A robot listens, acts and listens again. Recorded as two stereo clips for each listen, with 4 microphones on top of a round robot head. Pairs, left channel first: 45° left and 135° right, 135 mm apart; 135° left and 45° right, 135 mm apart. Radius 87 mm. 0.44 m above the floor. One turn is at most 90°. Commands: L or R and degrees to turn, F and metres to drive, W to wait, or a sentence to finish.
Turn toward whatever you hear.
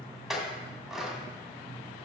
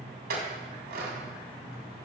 R50
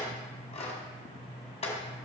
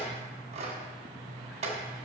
Facing the clink.